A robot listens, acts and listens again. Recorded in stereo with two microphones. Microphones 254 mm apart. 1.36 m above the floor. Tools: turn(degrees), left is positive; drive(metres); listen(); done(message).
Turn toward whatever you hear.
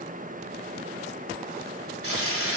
turn(degrees=-60)
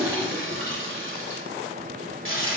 turn(degrees=-55)
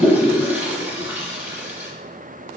done("Found it: a toilet flushing, straight ahead.")